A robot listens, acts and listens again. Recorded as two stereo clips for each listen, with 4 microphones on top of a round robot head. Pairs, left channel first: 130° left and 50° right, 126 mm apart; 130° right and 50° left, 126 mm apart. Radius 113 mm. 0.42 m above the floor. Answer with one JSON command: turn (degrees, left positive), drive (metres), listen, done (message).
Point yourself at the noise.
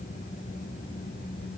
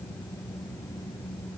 {"listen": true}
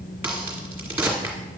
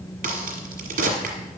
{"turn": 30}
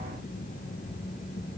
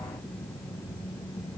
{"done": "I heard a crack from this way, but can't make it out now."}